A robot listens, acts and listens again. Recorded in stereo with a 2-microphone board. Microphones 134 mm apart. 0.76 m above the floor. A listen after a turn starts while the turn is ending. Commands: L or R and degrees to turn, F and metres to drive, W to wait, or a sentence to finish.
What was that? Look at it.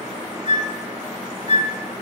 L65
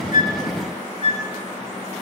L45
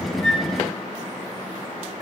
W
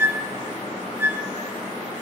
R20
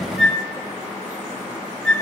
Facing the flute.